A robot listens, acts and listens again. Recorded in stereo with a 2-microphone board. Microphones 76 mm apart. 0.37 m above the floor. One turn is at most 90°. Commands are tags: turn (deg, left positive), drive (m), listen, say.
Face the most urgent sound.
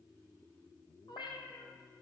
<listen/>
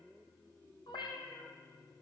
<listen/>
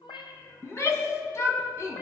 <turn deg="40"/>
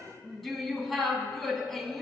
<say>Facing the shout.</say>